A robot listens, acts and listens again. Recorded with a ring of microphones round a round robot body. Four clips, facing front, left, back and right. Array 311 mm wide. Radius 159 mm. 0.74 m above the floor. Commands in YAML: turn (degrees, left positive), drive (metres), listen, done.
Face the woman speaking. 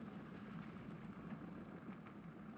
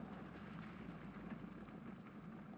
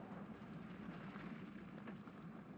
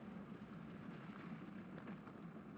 listen: true
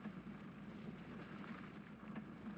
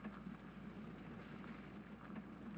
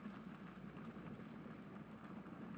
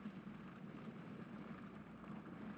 listen: true
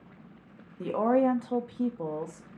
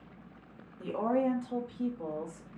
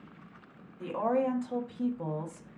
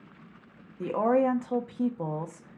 turn: -80
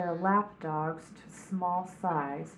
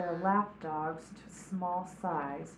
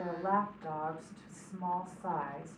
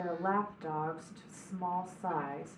turn: 15
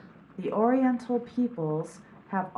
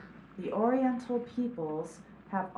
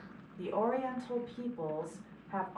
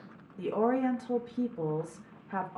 done: "Found it: a woman speaking, straight ahead."